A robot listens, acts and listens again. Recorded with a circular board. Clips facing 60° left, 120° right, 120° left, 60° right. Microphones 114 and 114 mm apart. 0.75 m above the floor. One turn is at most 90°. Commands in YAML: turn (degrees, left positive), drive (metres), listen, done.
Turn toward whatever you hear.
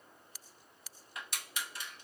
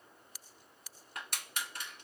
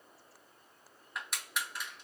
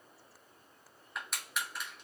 turn: -90
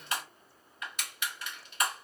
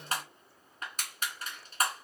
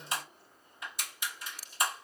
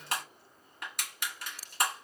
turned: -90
turn: -75
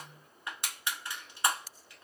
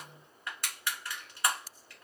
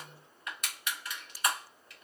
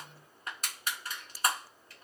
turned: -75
turn: -10
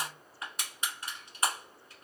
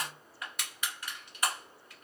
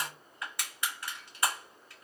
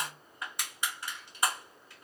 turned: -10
done: "Facing the crushing."